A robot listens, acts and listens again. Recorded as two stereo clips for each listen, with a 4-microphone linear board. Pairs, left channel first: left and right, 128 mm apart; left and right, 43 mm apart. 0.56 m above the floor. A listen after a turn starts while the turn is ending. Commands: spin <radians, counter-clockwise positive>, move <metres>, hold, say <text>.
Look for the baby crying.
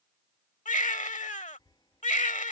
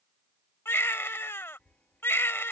spin 1.57
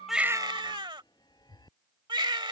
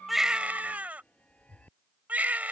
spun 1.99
spin -0.61
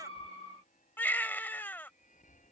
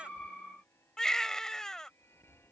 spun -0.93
spin 0.26
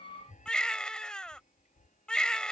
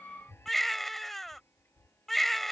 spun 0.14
say Facing the baby crying.